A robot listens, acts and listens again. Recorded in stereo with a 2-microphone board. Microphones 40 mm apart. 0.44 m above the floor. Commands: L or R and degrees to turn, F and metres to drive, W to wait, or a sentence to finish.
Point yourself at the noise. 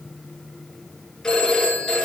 L15
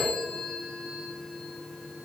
Facing the phone ringing.